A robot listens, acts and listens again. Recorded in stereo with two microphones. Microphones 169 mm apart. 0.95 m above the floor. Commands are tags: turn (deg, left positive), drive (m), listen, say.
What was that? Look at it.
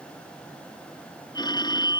<turn deg="25"/>
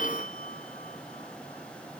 <turn deg="130"/>
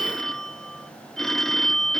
<say>Found it: a phone ringing, straight ahead.</say>